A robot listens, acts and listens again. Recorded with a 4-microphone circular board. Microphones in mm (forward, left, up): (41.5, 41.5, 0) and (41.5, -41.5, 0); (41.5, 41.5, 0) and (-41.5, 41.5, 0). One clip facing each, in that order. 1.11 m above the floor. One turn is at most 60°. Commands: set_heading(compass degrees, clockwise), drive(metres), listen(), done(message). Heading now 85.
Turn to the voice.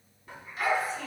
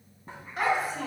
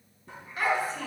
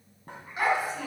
set_heading(145)
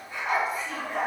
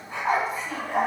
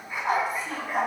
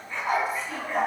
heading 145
set_heading(190)
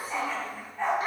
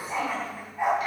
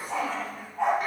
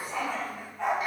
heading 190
listen()
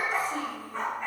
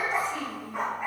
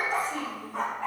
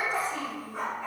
set_heading(150)
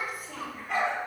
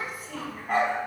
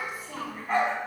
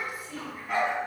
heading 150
done("Found it: a child speaking, straight ahead.")